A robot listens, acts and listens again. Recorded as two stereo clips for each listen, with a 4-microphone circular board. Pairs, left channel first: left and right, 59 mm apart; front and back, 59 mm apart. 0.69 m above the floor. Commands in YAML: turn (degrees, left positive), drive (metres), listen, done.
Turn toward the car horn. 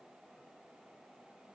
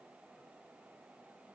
listen: true
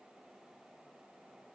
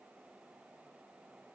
listen: true
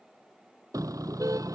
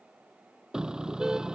turn: -100
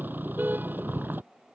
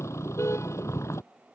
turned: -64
turn: -35
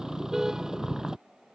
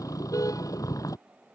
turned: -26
turn: -10
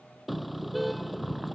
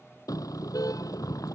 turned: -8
done: "Found it: a car horn, straight ahead."